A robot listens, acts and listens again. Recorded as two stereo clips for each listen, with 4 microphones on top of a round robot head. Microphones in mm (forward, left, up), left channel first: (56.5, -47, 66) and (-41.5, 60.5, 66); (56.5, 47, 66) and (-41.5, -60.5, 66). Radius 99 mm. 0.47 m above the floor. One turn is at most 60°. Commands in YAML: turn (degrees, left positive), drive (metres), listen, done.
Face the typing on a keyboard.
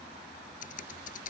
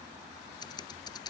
turn: -15
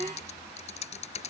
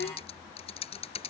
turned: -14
done: "Found it: typing on a keyboard, straight ahead."